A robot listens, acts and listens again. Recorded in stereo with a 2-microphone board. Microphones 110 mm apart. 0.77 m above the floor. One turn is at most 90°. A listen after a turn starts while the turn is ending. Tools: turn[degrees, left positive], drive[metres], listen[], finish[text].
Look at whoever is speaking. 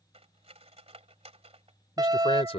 Thought: The man speaking: about 65° left or 115° left.
Action: turn[65]
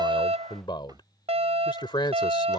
Thought: So it is at 45° left.
Action: turn[45]
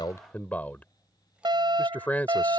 Thought: The man speaking is now 15° left.
Action: turn[15]
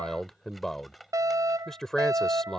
Action: finish[Found it: a man speaking, straight ahead.]